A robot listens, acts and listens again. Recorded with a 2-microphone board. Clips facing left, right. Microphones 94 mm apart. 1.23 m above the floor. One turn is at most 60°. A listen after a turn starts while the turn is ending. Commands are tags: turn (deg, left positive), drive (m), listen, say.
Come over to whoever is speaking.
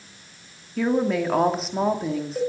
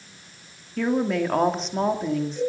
<turn deg="30"/>
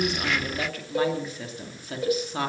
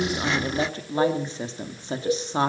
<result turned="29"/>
<turn deg="-25"/>
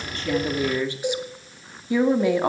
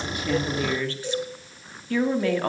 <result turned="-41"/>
<turn deg="15"/>
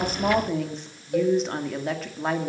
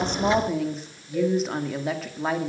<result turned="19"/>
<drive m="1.0"/>
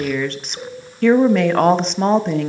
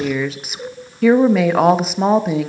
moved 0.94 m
<drive m="1.0"/>
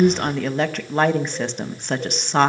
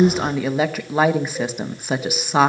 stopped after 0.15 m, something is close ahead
<say>Arrived at the woman speaking, straight ahead.</say>